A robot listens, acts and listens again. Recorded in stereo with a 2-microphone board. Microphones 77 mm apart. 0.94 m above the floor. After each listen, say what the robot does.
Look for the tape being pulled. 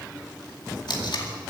Turn 70° left.
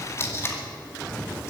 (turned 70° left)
Turn 35° left.
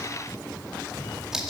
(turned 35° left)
Found it: tape being pulled, straight ahead, 2 to 4 m away.